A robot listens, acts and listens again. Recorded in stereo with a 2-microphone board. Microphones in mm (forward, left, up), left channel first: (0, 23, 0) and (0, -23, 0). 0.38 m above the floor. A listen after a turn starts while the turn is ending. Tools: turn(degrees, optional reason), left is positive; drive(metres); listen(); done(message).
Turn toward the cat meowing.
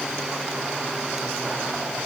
listen()
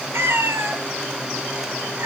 turn(degrees=-65, reason="The cat meowing: about 65° right or 115° right.")
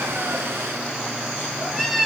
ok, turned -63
done("Facing the cat meowing, 1 to 2 m away.")